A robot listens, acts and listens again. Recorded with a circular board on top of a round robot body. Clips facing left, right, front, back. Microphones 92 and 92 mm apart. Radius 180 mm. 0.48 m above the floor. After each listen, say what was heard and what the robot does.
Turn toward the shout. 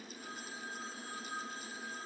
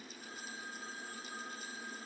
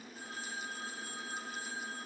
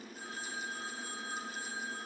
Keep listening.
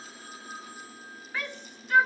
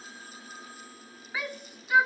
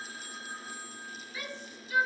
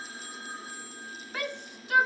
The shout: 170° right. Turn 170° right.
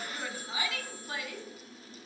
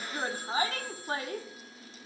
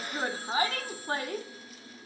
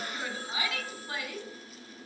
The shout is now 45° right. Turn 45° right.
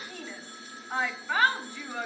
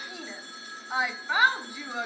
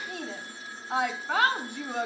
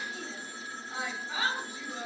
The shout is now 10° right. Turn 10° right.
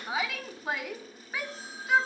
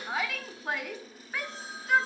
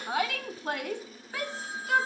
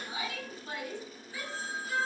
Found it: a shout, straight ahead, 1 to 2 m away.